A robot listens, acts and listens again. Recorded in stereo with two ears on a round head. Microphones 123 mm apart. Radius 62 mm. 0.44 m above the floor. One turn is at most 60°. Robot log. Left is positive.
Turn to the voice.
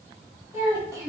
note: The child speaking: about 25° right or 155° right.
cmd yaw -25
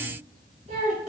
note: So it is at 120° right.
cmd yaw -60
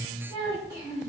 note: The child speaking is now 25° right.
cmd yaw -25
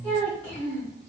note: The child speaking is now 10° left.
cmd yaw +10
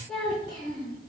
end: Found it: a child speaking, straight ahead, 2 to 4 m away.